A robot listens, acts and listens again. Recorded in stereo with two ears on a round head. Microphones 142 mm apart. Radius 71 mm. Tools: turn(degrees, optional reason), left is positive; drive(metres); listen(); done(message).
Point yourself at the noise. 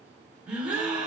turn(degrees=-30)
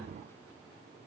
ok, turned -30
listen()
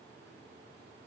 done("I heard a gasp, but can't make it out now. It was about 20° left or 140° right.")